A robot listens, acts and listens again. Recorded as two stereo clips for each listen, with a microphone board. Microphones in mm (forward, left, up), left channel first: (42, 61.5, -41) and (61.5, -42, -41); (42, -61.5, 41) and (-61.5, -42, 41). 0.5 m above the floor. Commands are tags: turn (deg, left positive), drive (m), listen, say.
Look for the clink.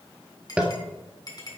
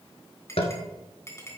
<turn deg="50"/>
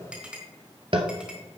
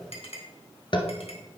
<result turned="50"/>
<say>Found it: a clink, straight ahead.</say>